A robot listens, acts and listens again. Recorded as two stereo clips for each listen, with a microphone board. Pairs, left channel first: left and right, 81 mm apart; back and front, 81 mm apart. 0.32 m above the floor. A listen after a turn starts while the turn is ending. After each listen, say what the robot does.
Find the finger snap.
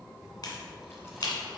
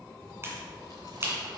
Turn 55° left.
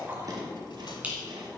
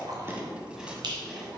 Turn 20° right.
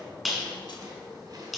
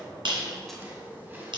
Found it: a finger snap, straight ahead, 2 to 4 m away.